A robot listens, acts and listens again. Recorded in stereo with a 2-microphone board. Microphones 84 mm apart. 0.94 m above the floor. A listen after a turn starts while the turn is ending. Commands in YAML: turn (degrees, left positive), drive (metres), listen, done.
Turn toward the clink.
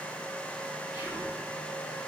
listen: true
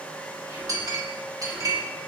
turn: -40
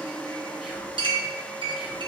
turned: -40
turn: -95
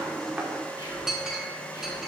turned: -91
done: "Found it: a clink, straight ahead, 1 to 2 m away."